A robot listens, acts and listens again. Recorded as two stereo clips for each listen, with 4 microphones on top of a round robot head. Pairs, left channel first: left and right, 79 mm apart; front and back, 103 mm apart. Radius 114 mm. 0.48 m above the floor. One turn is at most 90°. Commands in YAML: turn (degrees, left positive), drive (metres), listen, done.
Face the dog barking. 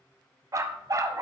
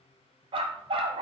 turn: -90
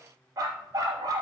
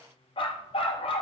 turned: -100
turn: -40
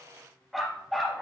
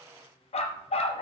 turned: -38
done: "Facing the dog barking."